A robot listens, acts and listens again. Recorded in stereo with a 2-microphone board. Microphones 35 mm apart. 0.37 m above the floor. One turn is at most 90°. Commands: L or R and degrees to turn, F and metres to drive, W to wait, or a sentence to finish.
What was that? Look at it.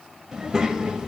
R20
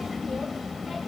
Facing the child speaking, under 1 m away.